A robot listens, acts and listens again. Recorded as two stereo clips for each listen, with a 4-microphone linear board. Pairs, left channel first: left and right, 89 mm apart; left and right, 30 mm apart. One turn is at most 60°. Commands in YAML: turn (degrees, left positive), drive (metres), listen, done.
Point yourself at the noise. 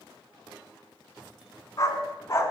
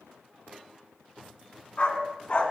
turn: 35
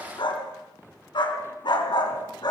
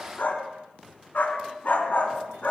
turn: 60
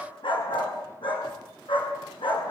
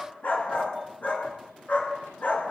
turn: 60
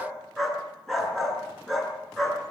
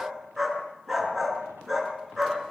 done: "Found it: a dog barking, straight ahead."